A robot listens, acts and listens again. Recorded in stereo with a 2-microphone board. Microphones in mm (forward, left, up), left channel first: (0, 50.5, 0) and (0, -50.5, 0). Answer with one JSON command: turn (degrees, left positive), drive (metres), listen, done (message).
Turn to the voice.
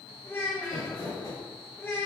{"turn": 20}
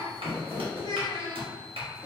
{"turn": 135}
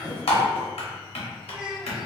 {"listen": true}
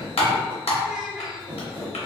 {"listen": true}
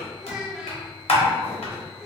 {"done": "Facing where the child speaking came from. I can't hear it now."}